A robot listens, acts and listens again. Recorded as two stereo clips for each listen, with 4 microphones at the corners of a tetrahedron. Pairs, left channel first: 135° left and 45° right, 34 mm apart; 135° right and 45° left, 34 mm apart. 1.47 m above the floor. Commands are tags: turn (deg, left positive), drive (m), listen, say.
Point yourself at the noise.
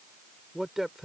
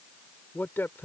<turn deg="-125"/>
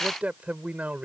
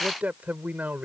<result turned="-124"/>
<say>Facing the man speaking.</say>